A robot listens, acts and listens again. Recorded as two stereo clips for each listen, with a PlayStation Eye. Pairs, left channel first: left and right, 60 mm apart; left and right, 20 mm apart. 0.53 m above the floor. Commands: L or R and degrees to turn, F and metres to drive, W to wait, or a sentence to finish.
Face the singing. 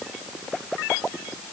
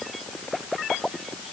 W
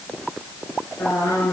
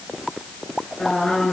L60
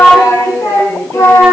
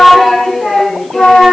L60
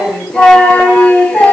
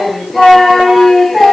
L20
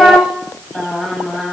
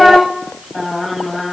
Facing the singing, 1 to 2 m away.